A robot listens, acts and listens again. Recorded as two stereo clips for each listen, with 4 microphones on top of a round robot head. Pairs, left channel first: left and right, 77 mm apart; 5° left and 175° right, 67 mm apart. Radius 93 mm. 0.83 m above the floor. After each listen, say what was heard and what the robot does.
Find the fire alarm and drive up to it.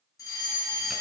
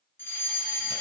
The fire alarm: 55° left. Turn 55° left.
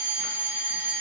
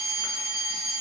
The fire alarm is now 25° right. Turn 25° right.
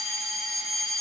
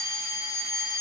Drive 1.0 m forward.
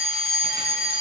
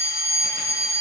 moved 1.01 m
Drive 1.0 m forward.
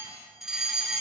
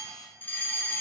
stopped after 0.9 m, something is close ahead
The fire alarm is now 10° right. Turn 10° right.
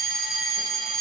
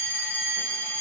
Arrived at the fire alarm, straight ahead.